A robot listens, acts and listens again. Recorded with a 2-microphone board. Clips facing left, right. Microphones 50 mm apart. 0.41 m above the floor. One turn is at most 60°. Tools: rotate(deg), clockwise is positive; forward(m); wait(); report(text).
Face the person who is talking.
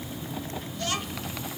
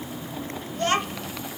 rotate(40)
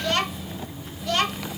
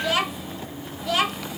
report("Found it: a child speaking, straight ahead.")